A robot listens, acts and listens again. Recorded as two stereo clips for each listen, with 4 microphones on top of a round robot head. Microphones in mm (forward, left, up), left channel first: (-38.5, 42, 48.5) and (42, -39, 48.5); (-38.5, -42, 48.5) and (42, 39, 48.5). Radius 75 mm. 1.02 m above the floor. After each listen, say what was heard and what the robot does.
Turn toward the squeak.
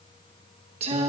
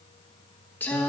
Keep listening.
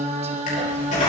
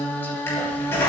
The squeak: 155° left. Turn 155° left.
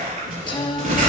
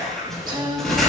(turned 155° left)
The squeak is now 50° right. Turn 50° right.
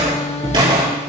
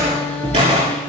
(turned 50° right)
Facing the squeak, over 4 m away.